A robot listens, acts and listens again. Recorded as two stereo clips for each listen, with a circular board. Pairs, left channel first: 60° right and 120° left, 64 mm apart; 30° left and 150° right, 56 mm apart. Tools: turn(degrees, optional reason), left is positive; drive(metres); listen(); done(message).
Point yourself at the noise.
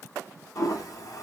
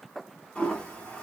turn(degrees=-40, reason="The toilet flushing: 40° right.")
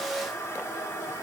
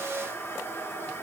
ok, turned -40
turn(degrees=-20, reason="The toilet flushing is now 20° right.")
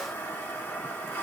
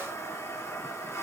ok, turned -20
done("Facing the toilet flushing, 1 to 2 m away.")